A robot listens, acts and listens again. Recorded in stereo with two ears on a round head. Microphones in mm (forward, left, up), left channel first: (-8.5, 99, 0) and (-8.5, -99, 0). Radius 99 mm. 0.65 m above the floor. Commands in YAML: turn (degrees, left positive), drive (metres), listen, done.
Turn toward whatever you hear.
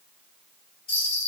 turn: 25
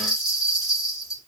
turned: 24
done: "Facing the bell, 1 to 2 m away."